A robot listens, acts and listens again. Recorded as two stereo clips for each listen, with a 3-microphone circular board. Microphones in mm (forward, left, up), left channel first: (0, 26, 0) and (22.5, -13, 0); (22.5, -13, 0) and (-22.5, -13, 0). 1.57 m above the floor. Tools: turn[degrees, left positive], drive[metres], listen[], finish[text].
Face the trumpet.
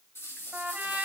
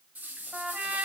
Thought: The trumpet: 115° right.
Action: turn[-115]
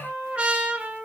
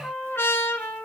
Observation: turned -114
Action: finish[Facing the trumpet, 2 to 4 m away.]